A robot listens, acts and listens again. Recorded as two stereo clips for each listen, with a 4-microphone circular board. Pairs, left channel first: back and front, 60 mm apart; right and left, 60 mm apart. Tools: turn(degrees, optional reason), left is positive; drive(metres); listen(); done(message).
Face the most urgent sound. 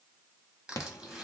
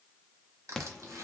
turn(degrees=-170, reason="The alarm: 170° right.")
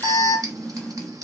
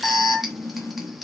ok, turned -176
done("Facing the alarm.")